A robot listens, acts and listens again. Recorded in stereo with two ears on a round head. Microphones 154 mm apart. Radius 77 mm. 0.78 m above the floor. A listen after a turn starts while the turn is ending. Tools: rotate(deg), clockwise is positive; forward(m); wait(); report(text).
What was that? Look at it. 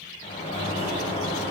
rotate(-40)
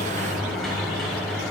report("Found it: a sliding door, straight ahead.")